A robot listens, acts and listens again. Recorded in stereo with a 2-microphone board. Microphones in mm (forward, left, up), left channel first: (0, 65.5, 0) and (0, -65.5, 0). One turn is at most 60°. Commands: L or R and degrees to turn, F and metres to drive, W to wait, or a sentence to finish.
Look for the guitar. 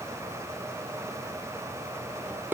W
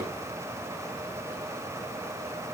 W
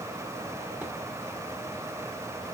I can't make out a guitar to turn to.